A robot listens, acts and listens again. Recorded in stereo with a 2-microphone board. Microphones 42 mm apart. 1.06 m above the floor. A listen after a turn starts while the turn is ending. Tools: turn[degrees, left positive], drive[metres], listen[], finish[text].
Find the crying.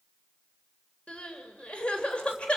Thought: The crying: about 25° left or 155° left.
Action: turn[25]
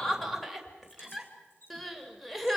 Action: finish[Facing the crying.]